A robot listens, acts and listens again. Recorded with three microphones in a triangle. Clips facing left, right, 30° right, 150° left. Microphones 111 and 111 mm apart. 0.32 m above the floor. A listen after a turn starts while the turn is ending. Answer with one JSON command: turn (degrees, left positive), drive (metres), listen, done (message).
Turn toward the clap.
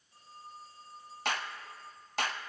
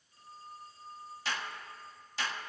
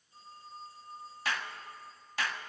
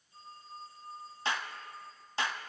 {"turn": 95}
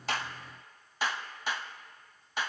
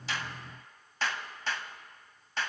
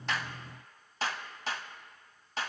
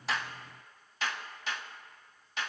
{"turn": 15}
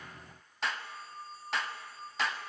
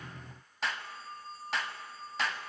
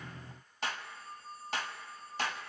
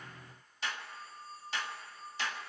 {"done": "Found it: a clap, straight ahead, 1 to 2 m away."}